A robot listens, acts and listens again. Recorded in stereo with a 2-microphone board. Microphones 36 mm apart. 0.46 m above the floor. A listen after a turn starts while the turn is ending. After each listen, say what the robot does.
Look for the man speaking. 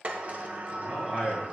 Turn 30° right.
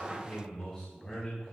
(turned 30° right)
Turn 15° left.
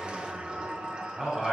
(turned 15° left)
Turn 10° right.
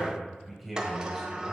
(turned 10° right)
Found it: a man speaking, straight ahead, 2 to 4 m away.